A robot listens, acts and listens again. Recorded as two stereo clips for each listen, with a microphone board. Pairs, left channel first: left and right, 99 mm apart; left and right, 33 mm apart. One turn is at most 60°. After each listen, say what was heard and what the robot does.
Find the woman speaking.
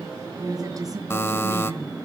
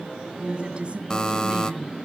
The woman speaking: about 35° right or 145° right. Turn 35° right.
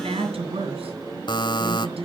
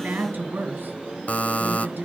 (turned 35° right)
So it is at 105° right. Turn 60° right.
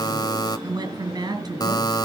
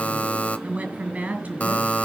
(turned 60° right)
The woman speaking is now 45° right. Turn 45° right.
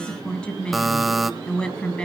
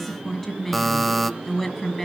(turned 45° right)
The woman speaking is now 10° left. Turn 10° left.
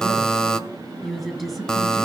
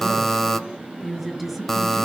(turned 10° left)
Found it: a woman speaking, straight ahead.